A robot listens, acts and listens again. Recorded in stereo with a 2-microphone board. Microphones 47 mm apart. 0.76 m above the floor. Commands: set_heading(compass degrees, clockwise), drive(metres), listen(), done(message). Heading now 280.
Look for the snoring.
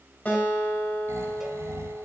set_heading(10)
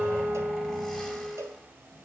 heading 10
listen()
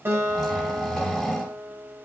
done("Found it: snoring, straight ahead, 2 to 4 m away.")